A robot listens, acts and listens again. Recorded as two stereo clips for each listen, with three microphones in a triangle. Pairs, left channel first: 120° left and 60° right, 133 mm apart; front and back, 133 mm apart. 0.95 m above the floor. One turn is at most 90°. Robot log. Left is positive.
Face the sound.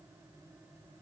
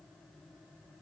cmd idle
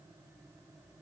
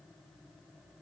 cmd idle
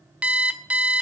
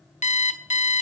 note: The alarm clock: 20° left.
cmd yaw +20
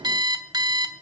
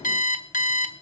end: Facing the alarm clock, 1 to 2 m away.